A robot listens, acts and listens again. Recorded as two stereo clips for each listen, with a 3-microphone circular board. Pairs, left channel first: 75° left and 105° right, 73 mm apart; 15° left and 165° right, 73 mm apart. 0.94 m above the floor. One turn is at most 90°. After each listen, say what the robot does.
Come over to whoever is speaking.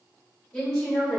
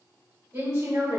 Turn 90° left.
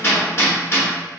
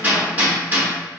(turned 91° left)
Turn 60° left.
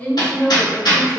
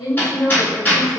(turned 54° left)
Drive 1.0 m forward.
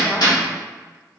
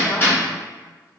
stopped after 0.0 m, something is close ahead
Keep listening.
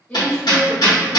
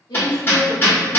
Something is in my way. I am facing the woman speaking but have not reached it.